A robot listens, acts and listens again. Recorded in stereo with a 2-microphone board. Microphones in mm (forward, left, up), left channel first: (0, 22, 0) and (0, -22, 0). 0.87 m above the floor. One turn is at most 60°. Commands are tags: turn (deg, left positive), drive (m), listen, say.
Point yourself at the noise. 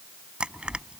<turn deg="-25"/>
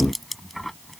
<say>Found it: crushing, straight ahead.</say>